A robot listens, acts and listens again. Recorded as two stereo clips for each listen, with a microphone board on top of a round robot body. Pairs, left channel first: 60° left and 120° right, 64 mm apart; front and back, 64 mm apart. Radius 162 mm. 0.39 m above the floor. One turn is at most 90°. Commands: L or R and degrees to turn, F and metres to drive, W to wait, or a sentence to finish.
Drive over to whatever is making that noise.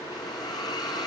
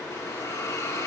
L45
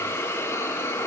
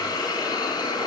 F1.0
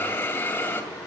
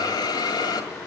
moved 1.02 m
F1.0
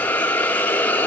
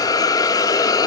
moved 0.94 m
F1.0
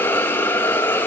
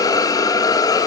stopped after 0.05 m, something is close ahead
Arrived at the hiss, straight ahead.